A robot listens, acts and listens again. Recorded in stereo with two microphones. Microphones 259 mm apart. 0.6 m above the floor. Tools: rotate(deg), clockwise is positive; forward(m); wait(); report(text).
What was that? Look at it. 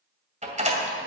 rotate(25)
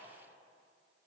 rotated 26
wait()
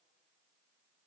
report("I heard a door slam, but can't make it out now. It was about straight ahead or 125° right.")